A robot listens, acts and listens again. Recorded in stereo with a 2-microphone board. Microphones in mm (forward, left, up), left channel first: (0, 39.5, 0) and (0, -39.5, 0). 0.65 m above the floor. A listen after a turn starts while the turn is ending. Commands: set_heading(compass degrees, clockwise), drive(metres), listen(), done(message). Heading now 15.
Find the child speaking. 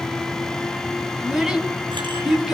set_heading(45)
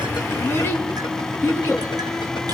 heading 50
set_heading(20)
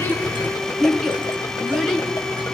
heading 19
done("Found it: a child speaking, straight ahead.")